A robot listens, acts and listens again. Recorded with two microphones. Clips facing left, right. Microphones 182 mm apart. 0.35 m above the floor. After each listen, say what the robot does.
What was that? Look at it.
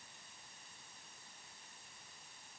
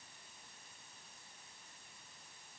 Keep listening.
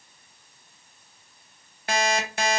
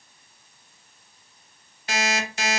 Turn 50° left.
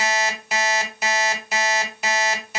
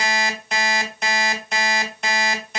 Found it: an alarm clock, straight ahead.